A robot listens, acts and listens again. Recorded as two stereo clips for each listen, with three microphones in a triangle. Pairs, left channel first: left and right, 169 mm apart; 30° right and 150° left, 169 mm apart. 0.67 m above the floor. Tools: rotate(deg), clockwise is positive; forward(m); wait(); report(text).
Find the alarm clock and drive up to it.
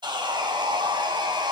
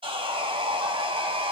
wait()
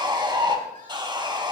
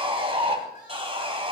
wait()
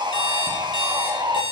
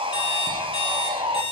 rotate(-25)
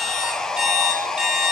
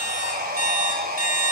forward(1.0)
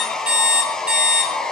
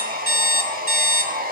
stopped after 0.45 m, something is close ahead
report("Something is in my way. I am facing the alarm clock but have not reached it.")